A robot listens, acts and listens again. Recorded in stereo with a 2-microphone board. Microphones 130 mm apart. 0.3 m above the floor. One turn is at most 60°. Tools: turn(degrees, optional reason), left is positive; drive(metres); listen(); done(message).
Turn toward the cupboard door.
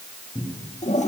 turn(degrees=30, reason="The cupboard door: about 30° left or 150° left.")
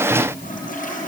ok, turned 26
listen()
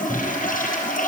done("Found it: a cupboard door, straight ahead.")